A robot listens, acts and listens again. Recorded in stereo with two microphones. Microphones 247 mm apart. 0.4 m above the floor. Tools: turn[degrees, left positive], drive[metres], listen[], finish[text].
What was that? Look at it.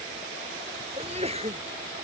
Thought: The sneeze: about 25° right or 155° right.
Action: turn[-25]
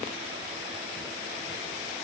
Action: listen[]
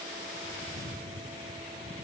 Action: finish[I heard a sneeze, but can't make it out now. It was about straight ahead or 130° right.]